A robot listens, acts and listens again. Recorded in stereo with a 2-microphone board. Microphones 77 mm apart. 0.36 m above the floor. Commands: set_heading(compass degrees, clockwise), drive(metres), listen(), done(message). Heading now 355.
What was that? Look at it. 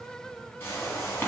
set_heading(325)
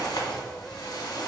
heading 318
set_heading(208)
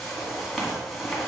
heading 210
done("Facing the whoosh.")